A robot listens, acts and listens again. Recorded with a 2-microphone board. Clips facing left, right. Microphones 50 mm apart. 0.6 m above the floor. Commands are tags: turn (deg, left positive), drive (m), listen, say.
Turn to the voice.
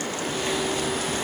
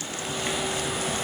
<listen/>
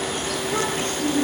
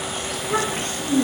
<turn deg="-90"/>
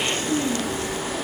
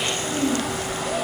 <listen/>
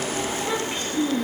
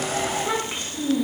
<turn deg="-15"/>
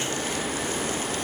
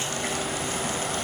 <listen/>
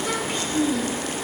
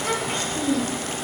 <say>Found it: a child speaking, straight ahead, 2 to 4 m away.</say>